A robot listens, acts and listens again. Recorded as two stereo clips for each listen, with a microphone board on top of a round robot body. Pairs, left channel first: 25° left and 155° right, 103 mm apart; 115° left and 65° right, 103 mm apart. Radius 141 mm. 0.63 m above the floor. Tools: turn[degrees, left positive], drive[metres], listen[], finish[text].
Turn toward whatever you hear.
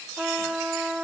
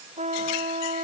Thought: The trumpet: 75° right.
Action: turn[-75]
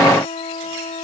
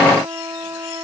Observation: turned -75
Action: finish[Facing the trumpet.]